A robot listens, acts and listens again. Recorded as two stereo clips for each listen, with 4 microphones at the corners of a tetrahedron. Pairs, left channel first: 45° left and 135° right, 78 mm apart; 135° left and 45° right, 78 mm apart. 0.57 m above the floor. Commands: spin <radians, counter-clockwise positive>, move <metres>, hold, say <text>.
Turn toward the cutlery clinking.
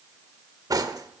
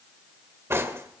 spin -1.75
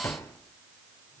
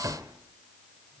say Found it: cutlery clinking, straight ahead.